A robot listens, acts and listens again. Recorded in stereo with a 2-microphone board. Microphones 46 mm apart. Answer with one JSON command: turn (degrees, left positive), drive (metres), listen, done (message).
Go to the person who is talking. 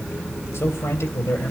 {"turn": 65}
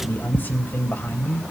{"turn": 45}
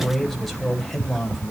{"drive": 1.0}
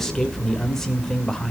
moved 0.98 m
{"turn": 10}
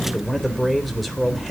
{"drive": 1.0}
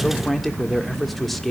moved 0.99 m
{"drive": 1.0}
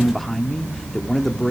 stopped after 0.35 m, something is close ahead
{"done": "Arrived at the man speaking, straight ahead."}